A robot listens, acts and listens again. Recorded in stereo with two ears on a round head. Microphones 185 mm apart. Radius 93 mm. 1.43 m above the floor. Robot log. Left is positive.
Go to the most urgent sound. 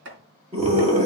note: The scream: about 30° right or 150° right.
cmd yaw -30
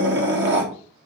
note: So it is at 120° right.
cmd yaw -120
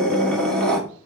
cmd fwd 1.0
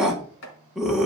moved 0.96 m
cmd fwd 1.0
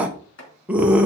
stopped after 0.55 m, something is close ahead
end: I am next to the scream.